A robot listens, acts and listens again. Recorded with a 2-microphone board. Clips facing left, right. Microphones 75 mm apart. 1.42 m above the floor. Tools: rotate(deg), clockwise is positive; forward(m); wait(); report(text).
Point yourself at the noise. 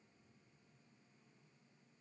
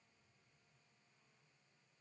wait()
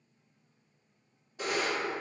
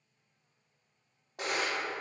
rotate(65)
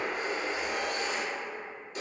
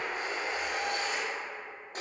rotate(45)
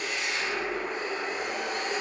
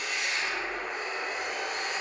report("Found it: a camera shutter, straight ahead.")